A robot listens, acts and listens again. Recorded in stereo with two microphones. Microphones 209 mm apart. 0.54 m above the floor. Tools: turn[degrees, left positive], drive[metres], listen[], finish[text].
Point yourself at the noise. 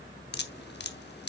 Thought: The dripping: about 55° left or 125° left.
Action: turn[55]
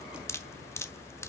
Thought: So it is at 15° left.
Action: turn[15]
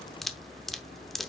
Action: finish[Found it: dripping, straight ahead, under 1 m away.]